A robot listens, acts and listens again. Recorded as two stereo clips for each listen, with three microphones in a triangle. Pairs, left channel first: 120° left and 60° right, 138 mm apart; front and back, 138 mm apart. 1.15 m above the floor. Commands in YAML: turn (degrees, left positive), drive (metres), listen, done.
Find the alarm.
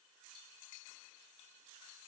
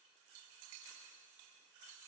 listen: true
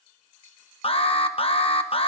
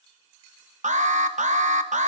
turn: 160
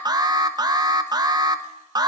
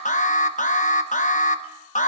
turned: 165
done: "Found it: an alarm, straight ahead, under 1 m away."